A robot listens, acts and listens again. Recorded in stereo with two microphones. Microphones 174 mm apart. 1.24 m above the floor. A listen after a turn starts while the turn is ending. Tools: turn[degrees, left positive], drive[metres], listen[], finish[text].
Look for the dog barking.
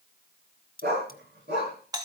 Action: turn[-90]
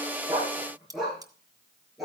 Action: finish[Facing the dog barking, over 4 m away.]